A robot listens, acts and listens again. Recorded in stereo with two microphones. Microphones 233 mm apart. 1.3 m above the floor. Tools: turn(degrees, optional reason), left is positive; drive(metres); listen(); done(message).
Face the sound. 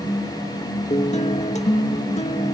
turn(degrees=30, reason="The guitar: about 30° left or 150° left.")
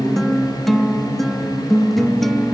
done("Facing the guitar.")